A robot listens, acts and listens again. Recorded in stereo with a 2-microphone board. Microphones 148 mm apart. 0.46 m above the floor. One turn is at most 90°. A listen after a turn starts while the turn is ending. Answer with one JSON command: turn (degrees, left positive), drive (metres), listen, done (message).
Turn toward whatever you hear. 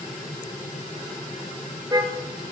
{"turn": -25}
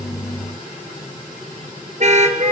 {"turn": -90}
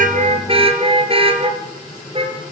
{"turn": -40}
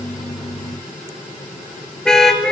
{"done": "Found it: a car horn, straight ahead."}